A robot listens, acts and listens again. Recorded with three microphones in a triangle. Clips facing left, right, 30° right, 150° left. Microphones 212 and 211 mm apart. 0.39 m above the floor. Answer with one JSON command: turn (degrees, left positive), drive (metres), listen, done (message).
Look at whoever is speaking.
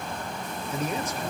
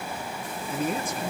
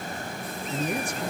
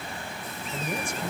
{"turn": -50}
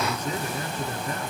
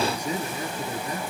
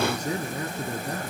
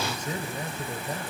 {"turn": -15}
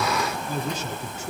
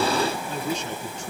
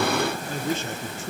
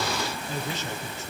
{"done": "Facing the man speaking, over 4 m away."}